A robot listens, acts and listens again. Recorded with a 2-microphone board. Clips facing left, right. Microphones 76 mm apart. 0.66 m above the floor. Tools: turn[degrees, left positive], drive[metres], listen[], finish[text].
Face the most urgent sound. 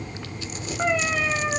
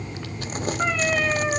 Action: listen[]
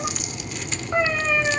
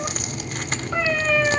Action: listen[]
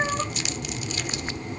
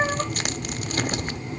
Action: finish[I can't make out anything urgent to turn to.]